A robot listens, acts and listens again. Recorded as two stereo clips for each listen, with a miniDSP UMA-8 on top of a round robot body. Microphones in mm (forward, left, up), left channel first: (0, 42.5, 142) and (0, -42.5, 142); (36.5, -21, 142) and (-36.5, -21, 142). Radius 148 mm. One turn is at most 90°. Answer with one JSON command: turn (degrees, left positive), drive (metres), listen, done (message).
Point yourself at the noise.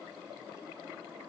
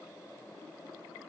{"listen": true}
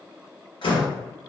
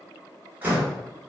{"turn": 90}
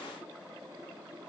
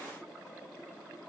{"turn": 20}
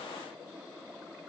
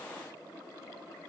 {"done": "Facing where the door slam came from. I can't hear it now."}